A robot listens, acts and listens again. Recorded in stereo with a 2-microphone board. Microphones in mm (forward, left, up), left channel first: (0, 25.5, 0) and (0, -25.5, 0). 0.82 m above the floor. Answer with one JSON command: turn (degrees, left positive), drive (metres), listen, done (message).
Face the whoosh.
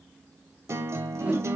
{"turn": -30}
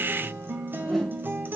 {"done": "Facing the whoosh, 2 to 4 m away."}